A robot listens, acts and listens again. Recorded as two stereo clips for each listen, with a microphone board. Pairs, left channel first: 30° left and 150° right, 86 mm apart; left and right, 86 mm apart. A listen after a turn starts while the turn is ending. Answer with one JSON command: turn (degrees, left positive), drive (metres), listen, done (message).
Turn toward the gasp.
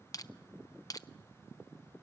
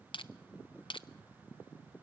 {"listen": true}
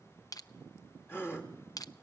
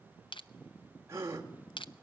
{"turn": -35}
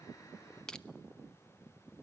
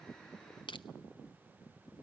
{"done": "Facing where the gasp came from. I can't hear it now."}